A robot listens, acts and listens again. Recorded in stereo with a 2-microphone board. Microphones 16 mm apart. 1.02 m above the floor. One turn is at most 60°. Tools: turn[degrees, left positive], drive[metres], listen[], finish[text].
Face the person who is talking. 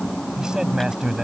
Thought: The man speaking: about 55° right or 125° right.
Action: turn[-55]
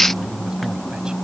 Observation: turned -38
Action: listen[]
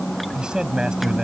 Thought: So it is at 85° right.
Action: turn[-60]
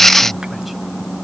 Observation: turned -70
Thought: Nothing new. It was at 15° right.
Action: turn[-15]
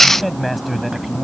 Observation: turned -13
Action: finish[Facing the man speaking.]